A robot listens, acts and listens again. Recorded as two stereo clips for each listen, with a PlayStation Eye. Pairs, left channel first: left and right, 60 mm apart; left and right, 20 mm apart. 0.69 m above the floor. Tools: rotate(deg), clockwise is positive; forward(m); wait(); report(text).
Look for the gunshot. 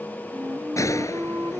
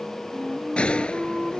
rotate(-60)
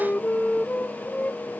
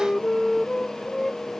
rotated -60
wait()
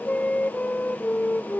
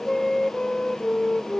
report("I heard a gunshot, but can't make it out now. It was about straight ahead or 60° left.")